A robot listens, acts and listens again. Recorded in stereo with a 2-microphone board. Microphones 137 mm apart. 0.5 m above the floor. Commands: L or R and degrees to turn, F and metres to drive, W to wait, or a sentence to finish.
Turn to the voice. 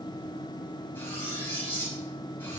W
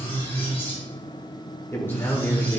L30
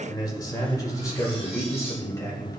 L20
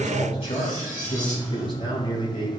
L140
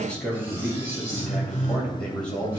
L10
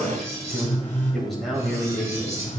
Found it: a man speaking, straight ahead, 2 to 4 m away.